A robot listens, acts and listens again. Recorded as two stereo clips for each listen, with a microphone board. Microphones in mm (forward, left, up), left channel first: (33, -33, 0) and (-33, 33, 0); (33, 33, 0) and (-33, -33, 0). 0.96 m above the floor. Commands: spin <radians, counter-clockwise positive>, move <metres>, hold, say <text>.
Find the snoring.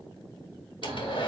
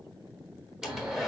spin 2.62
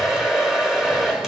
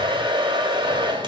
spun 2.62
hold
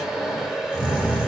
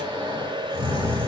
spin 1.05
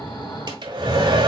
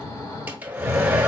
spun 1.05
say Facing the snoring, 2 to 4 m away.